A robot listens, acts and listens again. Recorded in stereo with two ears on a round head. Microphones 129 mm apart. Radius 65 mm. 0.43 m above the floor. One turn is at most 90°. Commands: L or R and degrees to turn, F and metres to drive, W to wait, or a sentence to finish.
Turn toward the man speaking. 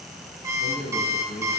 L55
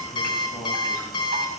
W
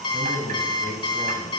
L10
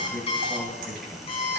Found it: a man speaking, straight ahead.